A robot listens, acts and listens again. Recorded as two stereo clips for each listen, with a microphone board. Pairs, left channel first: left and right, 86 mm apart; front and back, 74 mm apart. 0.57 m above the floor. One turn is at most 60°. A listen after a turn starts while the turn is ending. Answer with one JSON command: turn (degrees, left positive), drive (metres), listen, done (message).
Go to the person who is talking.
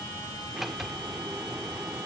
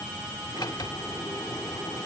{"listen": true}
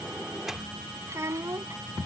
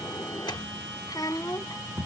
{"turn": -35}
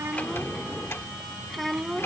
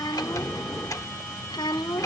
{"drive": 1.0}
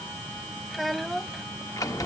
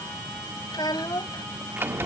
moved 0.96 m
{"drive": 1.0}
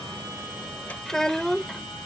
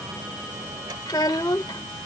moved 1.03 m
{"drive": 1.0}
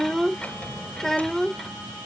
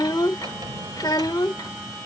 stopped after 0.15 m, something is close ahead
{"done": "I am next to the child speaking."}